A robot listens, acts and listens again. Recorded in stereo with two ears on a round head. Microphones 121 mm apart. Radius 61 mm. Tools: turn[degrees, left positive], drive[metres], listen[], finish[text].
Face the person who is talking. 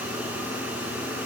Action: listen[]
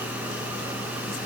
Action: listen[]
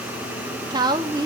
Thought: The woman speaking: about 30° right or 150° right.
Action: turn[-30]
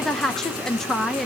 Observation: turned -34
Action: finish[Facing the woman speaking.]